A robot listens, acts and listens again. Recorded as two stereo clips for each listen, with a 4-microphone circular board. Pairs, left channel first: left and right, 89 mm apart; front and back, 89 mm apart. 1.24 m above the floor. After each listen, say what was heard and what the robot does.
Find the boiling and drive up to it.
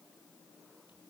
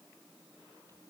Keep listening.
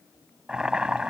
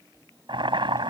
The boiling: 170° right. Turn 170° right.
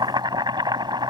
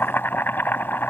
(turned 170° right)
The boiling is now 65° right. Turn 65° right.
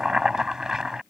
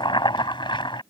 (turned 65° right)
Drive 1.0 m forward.
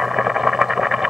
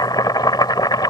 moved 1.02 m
Drive 1.0 m forward.
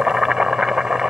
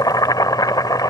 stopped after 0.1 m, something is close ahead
The boiling is now 10° right. Turn 10° right.
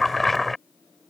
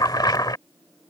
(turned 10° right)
I am next to the boiling.